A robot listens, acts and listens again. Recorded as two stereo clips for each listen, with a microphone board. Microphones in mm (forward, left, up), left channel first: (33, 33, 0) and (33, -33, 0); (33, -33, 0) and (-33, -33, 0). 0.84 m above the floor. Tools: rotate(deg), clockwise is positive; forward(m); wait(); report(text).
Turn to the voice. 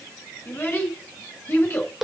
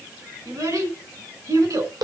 rotate(-150)
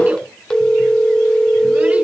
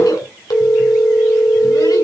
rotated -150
wait()
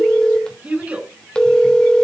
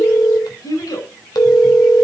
rotate(20)
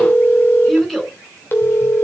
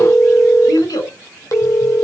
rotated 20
report("Found it: a child speaking, straight ahead.")